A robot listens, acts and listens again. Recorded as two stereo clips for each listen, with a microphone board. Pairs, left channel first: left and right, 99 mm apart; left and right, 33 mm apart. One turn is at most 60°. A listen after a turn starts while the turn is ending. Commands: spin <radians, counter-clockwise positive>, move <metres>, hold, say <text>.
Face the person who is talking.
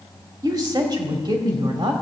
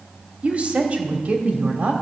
spin -0.87
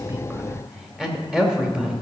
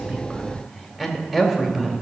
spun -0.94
spin -0.17
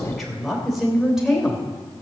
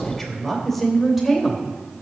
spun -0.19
say Facing the woman speaking, 2 to 4 m away.